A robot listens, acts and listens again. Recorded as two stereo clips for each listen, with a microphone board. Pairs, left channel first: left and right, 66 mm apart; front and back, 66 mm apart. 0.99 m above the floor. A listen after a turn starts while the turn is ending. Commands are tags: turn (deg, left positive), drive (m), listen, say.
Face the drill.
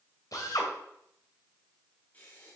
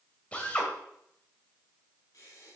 <turn deg="70"/>
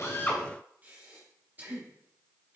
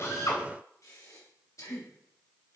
<listen/>
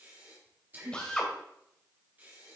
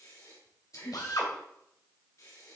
<turn deg="15"/>
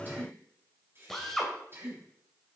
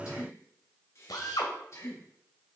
<say>Facing the drill, 1 to 2 m away.</say>